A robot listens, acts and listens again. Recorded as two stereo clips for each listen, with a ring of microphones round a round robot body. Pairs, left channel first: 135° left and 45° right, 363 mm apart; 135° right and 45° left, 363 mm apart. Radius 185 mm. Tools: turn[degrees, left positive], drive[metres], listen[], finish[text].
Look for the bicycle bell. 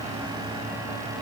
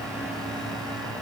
Action: listen[]
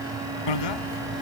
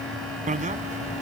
Thought: The bicycle bell: 115° left.
Action: turn[115]
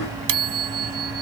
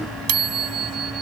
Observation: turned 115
Action: finish[Facing the bicycle bell.]